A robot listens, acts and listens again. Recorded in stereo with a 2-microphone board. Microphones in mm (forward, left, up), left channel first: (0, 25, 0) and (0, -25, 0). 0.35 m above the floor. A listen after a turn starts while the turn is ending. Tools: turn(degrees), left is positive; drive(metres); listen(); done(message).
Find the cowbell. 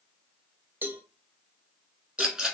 turn(degrees=-40)
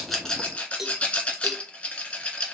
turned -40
done("Found it: a cowbell, straight ahead.")